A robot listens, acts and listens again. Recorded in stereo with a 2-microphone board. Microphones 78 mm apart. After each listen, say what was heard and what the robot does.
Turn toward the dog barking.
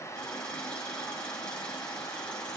Keep listening.
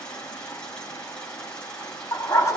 The dog barking: about 55° left or 125° left. Turn 55° left.
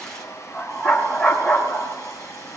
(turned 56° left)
Found it: a dog barking, straight ahead, 2 to 4 m away.